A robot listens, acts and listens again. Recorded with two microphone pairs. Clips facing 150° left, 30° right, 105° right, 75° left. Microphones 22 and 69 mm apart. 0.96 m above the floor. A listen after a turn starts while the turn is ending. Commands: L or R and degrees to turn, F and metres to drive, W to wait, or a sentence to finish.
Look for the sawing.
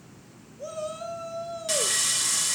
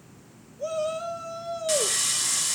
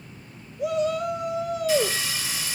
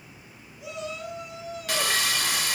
L55
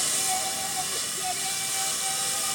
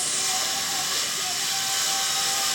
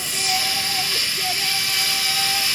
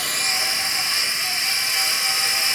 L10
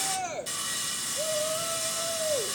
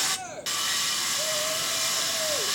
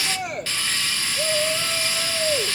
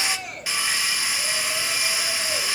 Found it: sawing, straight ahead, under 1 m away.